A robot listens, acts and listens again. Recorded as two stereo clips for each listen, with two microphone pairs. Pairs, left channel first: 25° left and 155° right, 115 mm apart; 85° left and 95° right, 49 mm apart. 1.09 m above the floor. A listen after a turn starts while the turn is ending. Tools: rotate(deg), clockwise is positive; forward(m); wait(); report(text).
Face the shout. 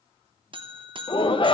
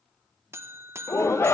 rotate(-65)
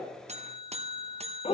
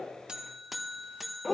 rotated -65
report("Found it: a shout, straight ahead, under 1 m away.")